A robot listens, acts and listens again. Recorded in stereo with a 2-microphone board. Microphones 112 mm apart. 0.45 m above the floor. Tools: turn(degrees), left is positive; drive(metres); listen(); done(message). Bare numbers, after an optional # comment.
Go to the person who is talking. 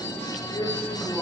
# The man speaking: about 45° left or 135° left.
turn(45)
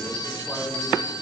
listen()
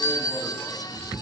listen()
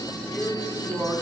drive(1.0)
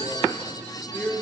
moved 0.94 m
drive(1.0)
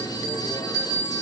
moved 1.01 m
listen()
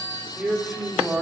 drive(1.0)
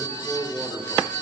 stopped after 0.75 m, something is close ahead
done("I am next to the man speaking.")